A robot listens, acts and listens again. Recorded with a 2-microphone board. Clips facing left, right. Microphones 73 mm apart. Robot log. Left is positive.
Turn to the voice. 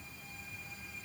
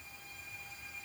cmd idle
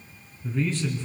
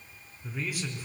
cmd yaw -30
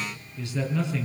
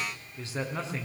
note: So it is at 145° right.
cmd yaw -145
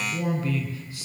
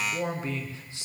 note: The man speaking is now 25° right.
cmd yaw -25
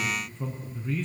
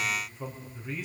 note: The man speaking is now 10° right.
cmd yaw -10
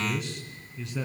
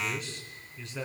end: Facing the man speaking.